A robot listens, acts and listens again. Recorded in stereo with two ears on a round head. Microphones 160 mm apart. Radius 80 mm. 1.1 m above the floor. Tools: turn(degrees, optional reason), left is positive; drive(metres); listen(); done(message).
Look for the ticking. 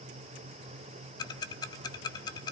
turn(degrees=20, reason="The ticking: about 20° left or 160° left.")
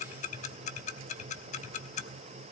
turn(degrees=135, reason="So it is at 135° left.")
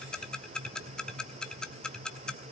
done("Found it: ticking, straight ahead.")